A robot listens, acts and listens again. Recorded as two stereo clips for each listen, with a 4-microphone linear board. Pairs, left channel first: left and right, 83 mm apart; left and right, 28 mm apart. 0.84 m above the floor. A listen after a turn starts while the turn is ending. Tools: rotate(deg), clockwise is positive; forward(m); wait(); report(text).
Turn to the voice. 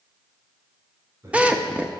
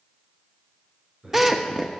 rotate(35)
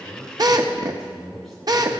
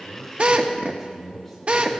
report("Found it: a man speaking, straight ahead.")